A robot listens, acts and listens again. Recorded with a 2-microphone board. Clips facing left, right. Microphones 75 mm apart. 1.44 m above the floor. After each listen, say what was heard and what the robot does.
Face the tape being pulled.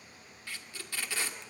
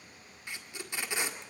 The tape being pulled: about 20° right or 160° right. Turn 20° right.
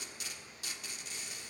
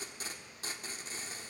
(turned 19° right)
So it is at 145° right. Turn 145° right.
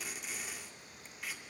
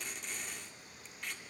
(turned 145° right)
Found it: tape being pulled, straight ahead.